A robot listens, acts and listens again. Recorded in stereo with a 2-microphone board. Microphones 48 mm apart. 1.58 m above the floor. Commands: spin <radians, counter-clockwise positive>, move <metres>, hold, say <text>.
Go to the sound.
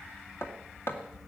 spin 1.05
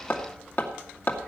spin 0.96
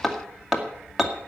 move 1.0
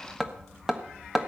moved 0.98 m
move 1.0
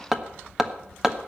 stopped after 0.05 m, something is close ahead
spin -0.17
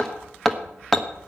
say I am next to the hammering.